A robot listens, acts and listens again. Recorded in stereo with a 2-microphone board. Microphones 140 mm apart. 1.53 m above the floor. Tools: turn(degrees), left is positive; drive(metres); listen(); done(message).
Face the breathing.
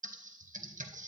listen()
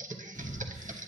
turn(degrees=30)
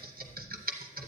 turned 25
turn(degrees=125)
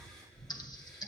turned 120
done("Found it: breathing, straight ahead, 2 to 4 m away.")